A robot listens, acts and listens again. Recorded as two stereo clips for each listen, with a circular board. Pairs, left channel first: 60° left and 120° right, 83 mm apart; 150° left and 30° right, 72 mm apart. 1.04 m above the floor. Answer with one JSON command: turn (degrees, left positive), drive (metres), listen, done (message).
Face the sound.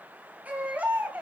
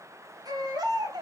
{"turn": -45}
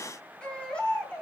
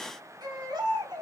{"turn": -15}
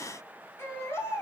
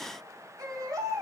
{"done": "Facing the baby crying, 2 to 4 m away."}